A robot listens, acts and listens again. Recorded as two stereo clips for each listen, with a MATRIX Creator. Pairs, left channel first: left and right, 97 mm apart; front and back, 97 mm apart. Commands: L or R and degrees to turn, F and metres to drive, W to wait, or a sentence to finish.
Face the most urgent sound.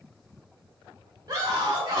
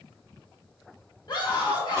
R40
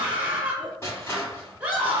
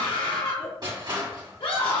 R15
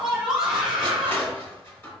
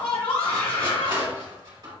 Facing the scream, 1 to 2 m away.